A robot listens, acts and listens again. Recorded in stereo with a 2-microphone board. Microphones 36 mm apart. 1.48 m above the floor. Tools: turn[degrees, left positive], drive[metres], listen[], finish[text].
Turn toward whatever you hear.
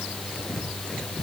Action: listen[]
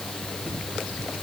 Action: listen[]
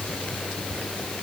Action: finish[I can't make out anything to turn to.]